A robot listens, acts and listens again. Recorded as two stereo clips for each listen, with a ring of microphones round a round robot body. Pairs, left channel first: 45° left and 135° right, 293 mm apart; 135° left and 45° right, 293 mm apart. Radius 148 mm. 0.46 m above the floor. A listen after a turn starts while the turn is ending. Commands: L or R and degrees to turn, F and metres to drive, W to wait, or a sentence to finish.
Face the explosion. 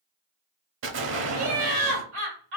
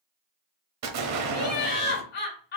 R85
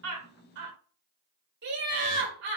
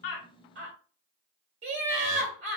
Facing where the explosion came from. I can't hear it now.